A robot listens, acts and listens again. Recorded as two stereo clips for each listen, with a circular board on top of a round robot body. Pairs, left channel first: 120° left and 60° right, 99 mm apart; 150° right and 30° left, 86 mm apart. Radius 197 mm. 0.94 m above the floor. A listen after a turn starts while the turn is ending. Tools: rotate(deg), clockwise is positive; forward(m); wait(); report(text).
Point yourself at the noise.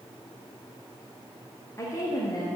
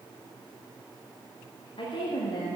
rotate(-175)
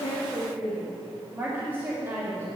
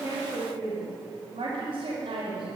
report("Facing the woman speaking, 2 to 4 m away.")